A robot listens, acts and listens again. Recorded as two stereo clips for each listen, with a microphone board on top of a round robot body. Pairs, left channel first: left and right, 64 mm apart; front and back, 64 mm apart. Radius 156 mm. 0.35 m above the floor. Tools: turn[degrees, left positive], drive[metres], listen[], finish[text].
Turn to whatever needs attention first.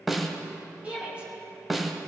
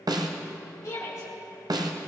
Thought: The shout: 25° right.
Action: turn[-25]
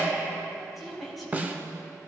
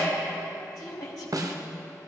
Action: finish[Found it: a shout, straight ahead.]